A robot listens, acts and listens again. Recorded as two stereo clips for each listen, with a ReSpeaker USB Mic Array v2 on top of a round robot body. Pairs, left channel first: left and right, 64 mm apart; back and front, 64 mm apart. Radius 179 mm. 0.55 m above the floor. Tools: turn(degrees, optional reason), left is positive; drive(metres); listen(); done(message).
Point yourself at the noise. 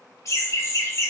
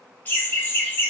turn(degrees=125, reason="The laughter: 125° left.")
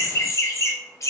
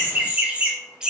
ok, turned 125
turn(degrees=80, reason="The laughter is now 80° left.")
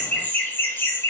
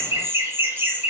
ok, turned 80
turn(degrees=50, reason="The laughter is now 50° left.")
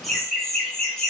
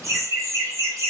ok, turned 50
turn(degrees=15, reason="The laughter is now 15° left.")
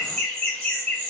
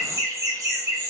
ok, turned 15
turn(degrees=15, reason="The laughter is now 15° left.")
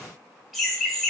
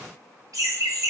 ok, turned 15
done("Found it: laughter, straight ahead, 1 to 2 m away.")